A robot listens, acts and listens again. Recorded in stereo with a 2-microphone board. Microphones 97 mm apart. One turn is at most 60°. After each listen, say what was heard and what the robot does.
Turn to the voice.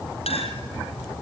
Keep listening.
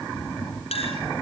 Keep listening.
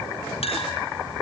I can't make out anyone speaking, only a clink.